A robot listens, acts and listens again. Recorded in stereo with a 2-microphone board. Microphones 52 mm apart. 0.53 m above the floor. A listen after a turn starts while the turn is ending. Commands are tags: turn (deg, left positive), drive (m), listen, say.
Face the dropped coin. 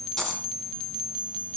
<turn deg="30"/>
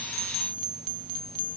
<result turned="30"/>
<listen/>
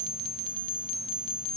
<say>I heard a dropped coin, but can't make it out now. It was about 20° right or 140° left.</say>